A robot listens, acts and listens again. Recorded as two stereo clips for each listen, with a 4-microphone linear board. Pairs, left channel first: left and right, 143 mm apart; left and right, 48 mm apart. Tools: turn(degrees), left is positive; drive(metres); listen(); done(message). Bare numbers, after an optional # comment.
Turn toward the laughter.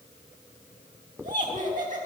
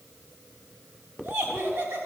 # The laughter: about 70° right or 110° right.
turn(-70)
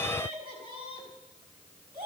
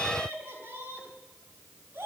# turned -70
# So it is at 40° right.
turn(-40)
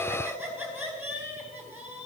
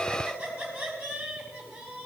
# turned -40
# The laughter is now 15° right.
turn(-15)
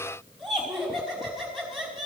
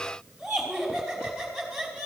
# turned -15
done("Facing the laughter, over 4 m away.")